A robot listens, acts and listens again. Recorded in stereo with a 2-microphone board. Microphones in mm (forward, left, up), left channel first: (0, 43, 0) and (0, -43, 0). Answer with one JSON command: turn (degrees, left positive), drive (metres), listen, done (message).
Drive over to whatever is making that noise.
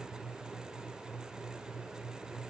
{"listen": true}
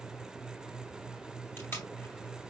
{"turn": 30}
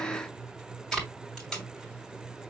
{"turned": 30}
{"drive": 1.0}
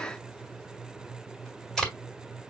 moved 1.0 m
{"turn": 10}
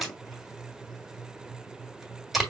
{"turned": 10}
{"drive": 1.0}
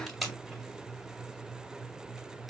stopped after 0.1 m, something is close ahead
{"done": "Arrived at the tape being pulled, straight ahead."}